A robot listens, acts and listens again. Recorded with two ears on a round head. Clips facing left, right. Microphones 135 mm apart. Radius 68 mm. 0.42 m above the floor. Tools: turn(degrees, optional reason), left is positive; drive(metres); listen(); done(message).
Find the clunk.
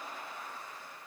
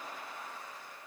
listen()
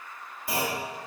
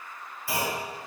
turn(degrees=20, reason="The clunk: about 20° left or 160° left.")
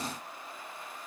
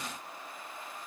listen()
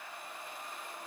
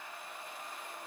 done("I heard a clunk, but can't make it out now. It was about straight ahead or 140° left.")